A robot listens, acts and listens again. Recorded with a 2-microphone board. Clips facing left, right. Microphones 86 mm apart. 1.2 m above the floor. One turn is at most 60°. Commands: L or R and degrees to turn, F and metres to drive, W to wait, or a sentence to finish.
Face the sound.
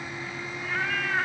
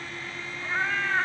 R30
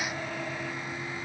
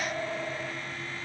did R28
W
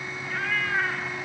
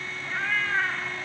L30
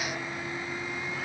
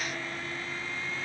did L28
W
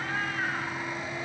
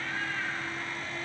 W
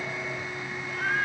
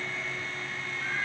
L60
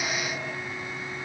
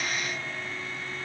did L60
L60
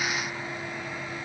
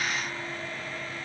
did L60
W
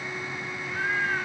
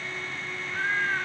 Facing the cat meowing, 2 to 4 m away.